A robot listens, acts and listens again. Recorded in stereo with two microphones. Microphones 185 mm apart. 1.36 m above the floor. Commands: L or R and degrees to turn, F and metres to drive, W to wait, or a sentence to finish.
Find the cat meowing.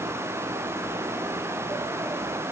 W
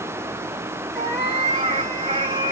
R25
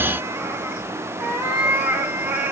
Found it: a cat meowing, straight ahead, 2 to 4 m away.